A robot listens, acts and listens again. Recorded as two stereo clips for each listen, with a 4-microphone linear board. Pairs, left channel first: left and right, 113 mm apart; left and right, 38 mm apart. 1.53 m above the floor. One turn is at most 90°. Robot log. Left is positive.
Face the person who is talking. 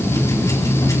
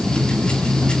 cmd idle
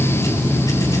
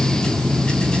cmd idle
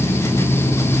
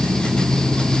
end: I can't make out anyone speaking.